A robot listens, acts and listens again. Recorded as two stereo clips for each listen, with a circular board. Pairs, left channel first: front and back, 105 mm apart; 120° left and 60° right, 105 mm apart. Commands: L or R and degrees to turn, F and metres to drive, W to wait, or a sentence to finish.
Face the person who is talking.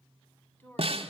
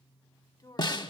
L65
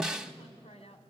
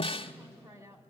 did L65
Facing the woman speaking, 2 to 4 m away.